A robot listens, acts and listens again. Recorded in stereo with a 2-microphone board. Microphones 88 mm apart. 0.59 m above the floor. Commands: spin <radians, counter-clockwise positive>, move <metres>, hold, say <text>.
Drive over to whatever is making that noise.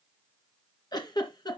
spin 0.87
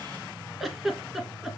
move 1.0
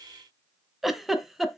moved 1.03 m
move 1.0
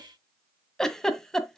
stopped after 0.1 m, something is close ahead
say I am next to the giggle.